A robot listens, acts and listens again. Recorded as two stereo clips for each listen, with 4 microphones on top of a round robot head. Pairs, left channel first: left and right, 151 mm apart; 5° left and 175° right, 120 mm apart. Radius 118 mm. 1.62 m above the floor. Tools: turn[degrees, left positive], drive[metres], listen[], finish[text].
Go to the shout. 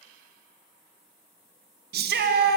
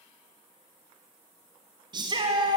Thought: The shout: 115° right.
Action: turn[-115]
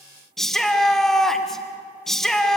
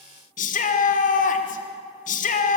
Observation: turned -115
Action: drive[1.0]
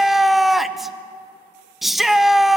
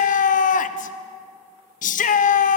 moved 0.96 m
Action: drive[1.0]
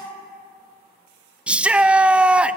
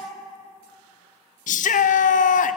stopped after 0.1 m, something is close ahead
Action: finish[I am next to the shout.]